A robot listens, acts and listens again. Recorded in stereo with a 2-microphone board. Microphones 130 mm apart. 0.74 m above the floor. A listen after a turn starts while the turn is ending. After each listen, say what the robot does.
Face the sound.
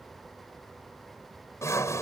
Turn 25° left.
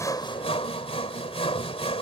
Turn 130° left.
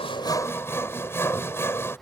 Turn 20° left.
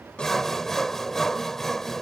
Facing the sawing.